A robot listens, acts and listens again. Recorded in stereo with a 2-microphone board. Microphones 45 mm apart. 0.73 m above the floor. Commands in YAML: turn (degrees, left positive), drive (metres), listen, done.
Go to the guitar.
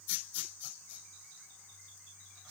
listen: true
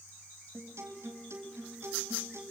turn: -90
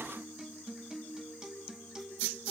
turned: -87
turn: -10
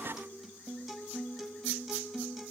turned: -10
drive: 1.0
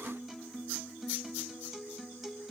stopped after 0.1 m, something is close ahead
done: "Blocked. The guitar is further on, straight ahead."